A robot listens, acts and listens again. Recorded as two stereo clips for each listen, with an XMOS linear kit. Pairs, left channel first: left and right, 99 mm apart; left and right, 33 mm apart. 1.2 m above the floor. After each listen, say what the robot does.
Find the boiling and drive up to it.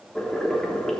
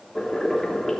Turn 30° left.
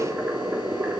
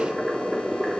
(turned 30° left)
Turn 20° right.
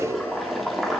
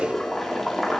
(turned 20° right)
Drive 1.0 m forward.
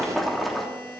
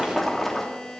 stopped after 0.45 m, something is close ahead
Something is in my way. I am facing the boiling but have not reached it.